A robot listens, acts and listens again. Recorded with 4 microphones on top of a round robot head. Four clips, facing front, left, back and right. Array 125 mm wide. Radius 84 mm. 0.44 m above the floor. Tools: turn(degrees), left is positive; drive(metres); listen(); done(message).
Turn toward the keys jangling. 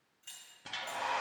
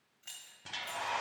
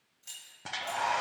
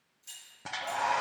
turn(degrees=110)
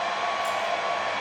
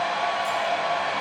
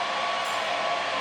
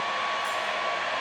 listen()
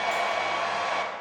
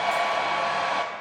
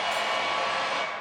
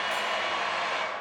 listen()
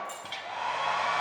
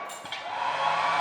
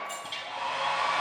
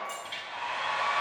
turn(degrees=20)
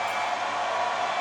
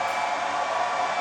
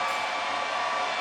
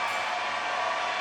listen()
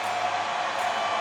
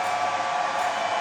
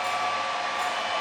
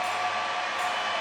listen()
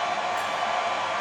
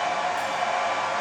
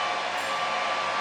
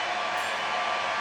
done("I heard keys jangling from this way, but can't make it out now.")